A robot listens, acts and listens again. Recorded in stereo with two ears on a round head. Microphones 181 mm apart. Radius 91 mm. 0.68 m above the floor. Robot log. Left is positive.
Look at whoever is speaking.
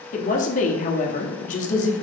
note: The woman speaking: about 40° left or 140° left.
cmd yaw +40
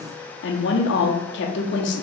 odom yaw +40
note: So it is at 95° left.
cmd yaw +95
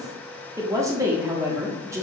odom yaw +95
note: The woman speaking is now 15° right.
cmd yaw -15
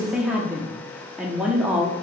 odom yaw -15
end: Found it: a woman speaking, straight ahead.